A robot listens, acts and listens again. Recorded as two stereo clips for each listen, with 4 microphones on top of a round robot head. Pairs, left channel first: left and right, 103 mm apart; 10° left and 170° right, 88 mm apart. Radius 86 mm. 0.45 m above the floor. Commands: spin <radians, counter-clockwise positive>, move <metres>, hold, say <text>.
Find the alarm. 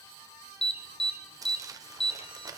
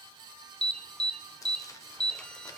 spin 1.57
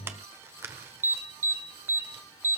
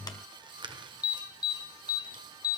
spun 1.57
spin -0.44
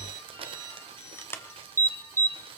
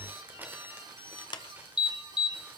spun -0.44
spin 0.44
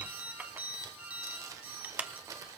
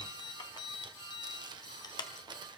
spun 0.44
spin -0.26
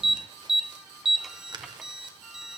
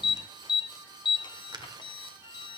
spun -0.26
say Facing the alarm, 1 to 2 m away.